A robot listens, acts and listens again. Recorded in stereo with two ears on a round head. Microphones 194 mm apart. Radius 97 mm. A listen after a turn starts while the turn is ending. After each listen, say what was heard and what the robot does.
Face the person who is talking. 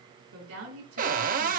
The woman speaking: about 75° right or 105° right. Turn 75° right.
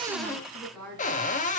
Facing the woman speaking, over 4 m away.